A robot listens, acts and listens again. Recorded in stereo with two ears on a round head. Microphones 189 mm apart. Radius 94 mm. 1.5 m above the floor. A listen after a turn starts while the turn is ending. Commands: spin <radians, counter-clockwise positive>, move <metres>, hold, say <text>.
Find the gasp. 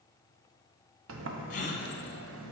spin 0.61
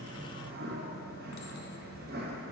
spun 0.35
hold
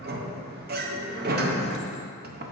say I heard a gasp, but can't make it out now. It was about 15° left or 125° left.